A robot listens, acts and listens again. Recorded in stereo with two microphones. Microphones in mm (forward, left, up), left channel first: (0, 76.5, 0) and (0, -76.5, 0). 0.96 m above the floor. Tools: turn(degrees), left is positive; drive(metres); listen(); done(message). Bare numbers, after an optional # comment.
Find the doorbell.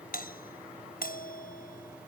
# The doorbell: about 65° left or 115° left.
turn(65)
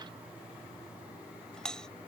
done("Facing the doorbell.")